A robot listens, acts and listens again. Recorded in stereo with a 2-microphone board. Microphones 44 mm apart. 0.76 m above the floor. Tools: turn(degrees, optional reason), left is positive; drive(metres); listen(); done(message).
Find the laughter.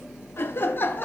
turn(degrees=45, reason="The laughter: about 45° left or 135° left.")
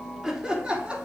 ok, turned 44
turn(degrees=-25, reason="So it is at 25° right.")
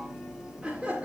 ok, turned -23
turn(degrees=-25, reason="The laughter is now 25° right.")
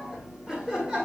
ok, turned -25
turn(degrees=-15, reason="The laughter is now 15° right.")
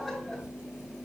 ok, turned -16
done("Facing the laughter, 2 to 4 m away.")